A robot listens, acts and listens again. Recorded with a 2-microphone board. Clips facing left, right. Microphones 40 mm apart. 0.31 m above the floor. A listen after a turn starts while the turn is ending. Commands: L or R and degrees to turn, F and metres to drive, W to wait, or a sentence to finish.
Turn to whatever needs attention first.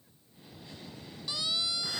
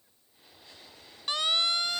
R50
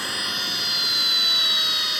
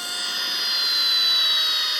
W
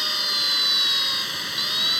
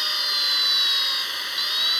W
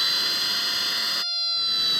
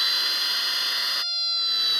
Found it: a siren, straight ahead.